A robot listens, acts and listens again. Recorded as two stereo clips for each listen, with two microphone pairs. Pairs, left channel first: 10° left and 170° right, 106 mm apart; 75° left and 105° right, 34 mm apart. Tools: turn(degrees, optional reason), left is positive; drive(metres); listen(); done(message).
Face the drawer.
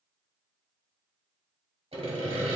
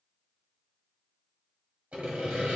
listen()
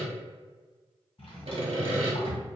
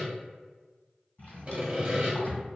turn(degrees=30, reason="The drawer: 30° left.")
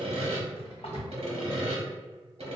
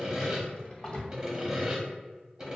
turn(degrees=10, reason="The drawer is now 10° left.")
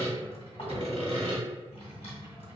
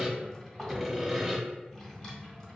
done("Found it: a drawer, straight ahead.")